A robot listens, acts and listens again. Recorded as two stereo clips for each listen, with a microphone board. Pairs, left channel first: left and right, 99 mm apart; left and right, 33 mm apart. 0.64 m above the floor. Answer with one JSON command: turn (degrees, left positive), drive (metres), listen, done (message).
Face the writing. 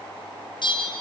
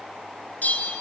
{"listen": true}
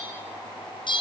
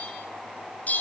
{"listen": true}
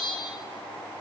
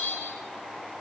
{"done": "I can't make out writing, only a bell."}